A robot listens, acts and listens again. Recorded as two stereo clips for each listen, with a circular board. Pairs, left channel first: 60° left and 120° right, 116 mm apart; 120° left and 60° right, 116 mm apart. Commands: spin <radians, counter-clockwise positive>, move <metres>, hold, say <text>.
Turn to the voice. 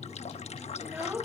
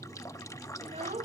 spin -0.79
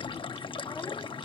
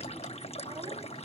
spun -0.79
hold
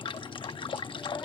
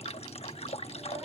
hold
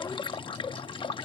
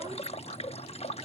say I heard a child speaking from this way, but can't make it out now.